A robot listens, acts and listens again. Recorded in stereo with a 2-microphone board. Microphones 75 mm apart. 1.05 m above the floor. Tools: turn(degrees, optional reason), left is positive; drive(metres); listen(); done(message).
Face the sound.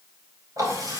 turn(degrees=-55, reason="The running tap: about 55° right or 125° right.")
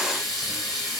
done("Found it: a running tap, straight ahead.")